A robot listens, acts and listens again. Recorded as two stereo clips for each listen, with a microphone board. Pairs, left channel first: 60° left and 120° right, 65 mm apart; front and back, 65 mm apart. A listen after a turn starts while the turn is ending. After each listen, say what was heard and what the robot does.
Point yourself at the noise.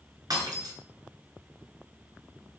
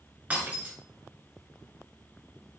The breaking glass: 110° right. Turn 110° right.
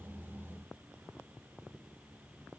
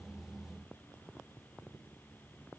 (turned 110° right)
Facing where the breaking glass came from. I can't hear it now.